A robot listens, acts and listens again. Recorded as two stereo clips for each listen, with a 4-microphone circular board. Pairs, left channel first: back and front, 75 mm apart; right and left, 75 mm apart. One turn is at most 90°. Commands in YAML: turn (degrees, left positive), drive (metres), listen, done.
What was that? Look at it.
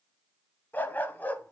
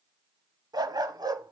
turn: 90
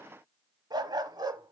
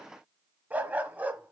turn: 20
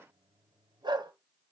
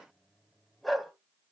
done: "Found it: a dog barking, straight ahead."